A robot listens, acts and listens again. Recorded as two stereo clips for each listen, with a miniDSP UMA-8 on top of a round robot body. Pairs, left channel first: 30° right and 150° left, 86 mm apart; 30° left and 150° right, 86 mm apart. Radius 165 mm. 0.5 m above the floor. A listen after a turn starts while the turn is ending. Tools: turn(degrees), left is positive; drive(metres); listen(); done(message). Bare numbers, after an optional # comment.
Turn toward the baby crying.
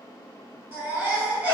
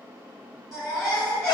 # The baby crying: 80° left.
turn(80)
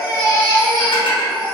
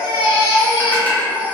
done("Facing the baby crying, 1 to 2 m away.")